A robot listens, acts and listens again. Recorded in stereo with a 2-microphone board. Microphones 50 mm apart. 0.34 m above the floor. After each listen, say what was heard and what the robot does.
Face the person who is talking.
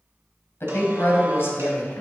The woman speaking: about 50° left or 130° left. Turn 50° left.
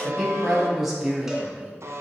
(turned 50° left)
So it is at 10° right. Turn 10° right.
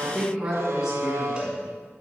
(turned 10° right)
The woman speaking is now 10° right. Turn 10° right.
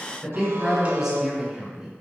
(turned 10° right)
The woman speaking is now 10° right. Turn 10° right.
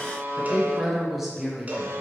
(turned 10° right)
Facing the woman speaking, 2 to 4 m away.